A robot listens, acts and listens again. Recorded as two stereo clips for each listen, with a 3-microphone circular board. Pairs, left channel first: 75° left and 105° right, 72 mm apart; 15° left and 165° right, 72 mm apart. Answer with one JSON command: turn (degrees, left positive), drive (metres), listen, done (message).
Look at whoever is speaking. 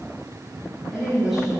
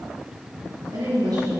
{"turn": 170}
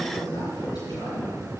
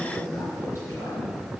{"turn": 60}
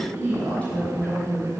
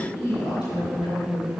{"done": "Facing the woman speaking, over 4 m away."}